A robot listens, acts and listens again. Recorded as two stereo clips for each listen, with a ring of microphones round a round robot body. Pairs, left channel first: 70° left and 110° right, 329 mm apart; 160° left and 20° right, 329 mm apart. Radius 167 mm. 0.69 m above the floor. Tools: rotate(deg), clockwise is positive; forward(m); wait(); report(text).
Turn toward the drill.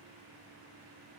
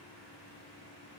wait()
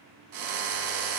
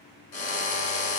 rotate(155)
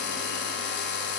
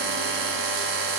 rotate(-10)
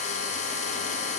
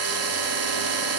report("Facing the drill, under 1 m away.")